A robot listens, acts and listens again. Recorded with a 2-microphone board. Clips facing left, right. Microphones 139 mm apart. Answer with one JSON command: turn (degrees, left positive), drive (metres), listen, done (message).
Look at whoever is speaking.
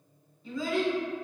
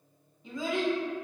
{"turn": -20}
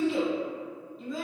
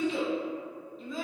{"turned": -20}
{"done": "Found it: a child speaking, straight ahead."}